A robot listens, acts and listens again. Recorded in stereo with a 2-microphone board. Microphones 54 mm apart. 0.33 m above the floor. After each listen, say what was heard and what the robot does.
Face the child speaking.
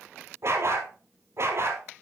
Keep listening.
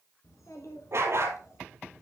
The child speaking: about 65° left or 115° left. Turn 65° left.
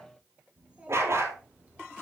So it is at 25° right. Turn 25° right.
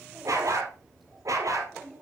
Found it: a child speaking, straight ahead, over 4 m away.